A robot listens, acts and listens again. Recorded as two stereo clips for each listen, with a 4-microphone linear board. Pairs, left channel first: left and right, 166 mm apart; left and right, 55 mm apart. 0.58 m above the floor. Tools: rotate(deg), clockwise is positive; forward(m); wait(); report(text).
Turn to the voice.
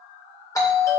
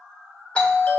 wait()
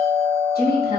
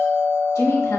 rotate(-65)
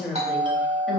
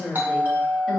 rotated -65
report("Found it: a woman speaking, straight ahead.")